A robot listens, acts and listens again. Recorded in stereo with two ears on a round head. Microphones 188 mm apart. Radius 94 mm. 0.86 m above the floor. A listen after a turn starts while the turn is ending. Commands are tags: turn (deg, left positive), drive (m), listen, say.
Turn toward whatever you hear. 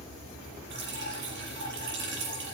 <turn deg="-60"/>
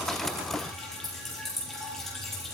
<say>Facing the dripping.</say>